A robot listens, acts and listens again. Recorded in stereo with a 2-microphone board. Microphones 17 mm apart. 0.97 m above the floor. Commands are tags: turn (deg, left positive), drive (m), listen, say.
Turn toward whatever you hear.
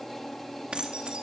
<turn deg="-90"/>
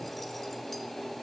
<listen/>
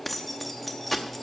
<say>Found it: keys jangling, straight ahead, 1 to 2 m away.</say>